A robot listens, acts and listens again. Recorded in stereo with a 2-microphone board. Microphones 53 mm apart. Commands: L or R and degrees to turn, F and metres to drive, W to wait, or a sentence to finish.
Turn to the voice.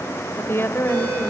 L50
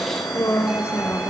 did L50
L55
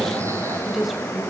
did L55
Facing the woman speaking.